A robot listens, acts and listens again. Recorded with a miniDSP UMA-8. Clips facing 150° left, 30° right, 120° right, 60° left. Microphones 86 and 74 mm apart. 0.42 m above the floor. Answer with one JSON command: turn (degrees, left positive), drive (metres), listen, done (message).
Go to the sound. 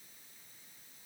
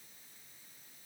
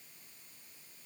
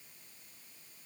{"listen": true}
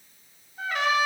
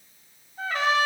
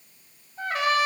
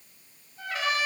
{"turn": -80}
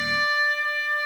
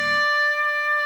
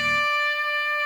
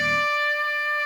{"drive": 1.0}
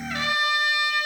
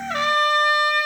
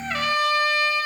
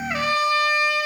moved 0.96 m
{"drive": 1.0}
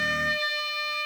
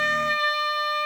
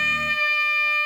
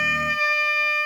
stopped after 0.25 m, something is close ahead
{"turn": -10}
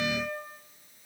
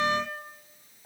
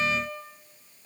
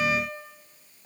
{"done": "Arrived at the trumpet, straight ahead."}